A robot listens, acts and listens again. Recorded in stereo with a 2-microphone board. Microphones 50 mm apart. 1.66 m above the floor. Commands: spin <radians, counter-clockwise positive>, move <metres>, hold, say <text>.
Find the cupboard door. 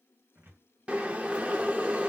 spin -0.96
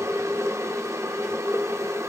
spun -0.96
hold
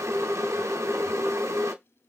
hold
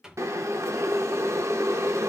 spin -0.26
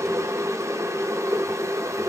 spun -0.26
hold
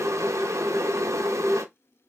hold
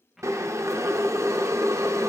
say Found it: a cupboard door, straight ahead.